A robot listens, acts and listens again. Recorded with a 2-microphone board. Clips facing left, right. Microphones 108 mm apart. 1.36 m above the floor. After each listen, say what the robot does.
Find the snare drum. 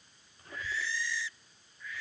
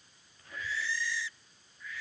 Keep listening.
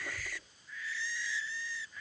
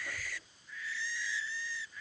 Keep listening.
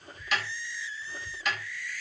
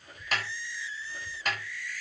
Turn 40° right.
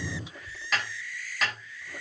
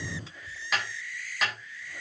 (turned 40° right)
Found it: a snare drum, straight ahead, over 4 m away.